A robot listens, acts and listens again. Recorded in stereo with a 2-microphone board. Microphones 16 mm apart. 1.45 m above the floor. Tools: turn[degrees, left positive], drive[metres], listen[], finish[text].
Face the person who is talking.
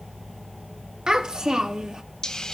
Thought: The child speaking: about 50° right or 130° right.
Action: turn[-50]
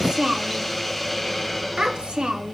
Thought: So it is at 80° right.
Action: turn[-80]
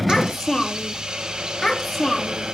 Thought: The child speaking is now 15° left.
Action: turn[15]
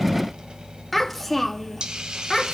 Action: finish[Found it: a child speaking, straight ahead, 2 to 4 m away.]